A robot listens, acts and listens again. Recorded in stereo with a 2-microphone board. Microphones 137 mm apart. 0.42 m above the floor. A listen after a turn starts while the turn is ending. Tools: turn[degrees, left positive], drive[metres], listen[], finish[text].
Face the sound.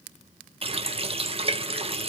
Thought: The running tap: about 45° right or 135° right.
Action: turn[-45]
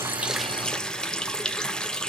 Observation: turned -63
Action: finish[Facing the running tap.]